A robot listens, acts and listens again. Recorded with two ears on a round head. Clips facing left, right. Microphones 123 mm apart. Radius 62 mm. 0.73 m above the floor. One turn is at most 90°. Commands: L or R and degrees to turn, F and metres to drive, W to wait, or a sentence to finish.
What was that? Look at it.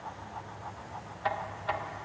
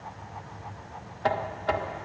R55
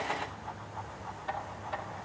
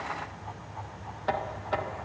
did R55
R70
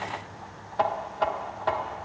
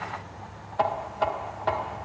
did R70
Facing the knocking.